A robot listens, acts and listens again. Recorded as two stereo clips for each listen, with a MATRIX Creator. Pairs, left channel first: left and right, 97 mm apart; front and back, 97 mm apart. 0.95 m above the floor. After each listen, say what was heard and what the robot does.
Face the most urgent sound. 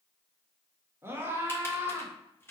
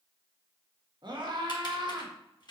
The scream: 155° right. Turn 155° right.
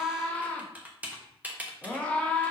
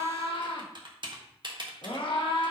The scream is now 15° left. Turn 15° left.
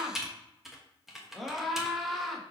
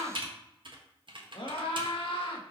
Found it: a scream, straight ahead, 1 to 2 m away.